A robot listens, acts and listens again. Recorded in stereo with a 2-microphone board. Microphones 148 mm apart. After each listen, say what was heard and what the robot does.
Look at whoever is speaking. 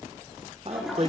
The man speaking: about 45° right or 135° right. Turn 45° right.
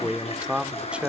So it is at 10° right. Turn 10° right.
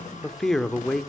Found it: a man speaking, straight ahead.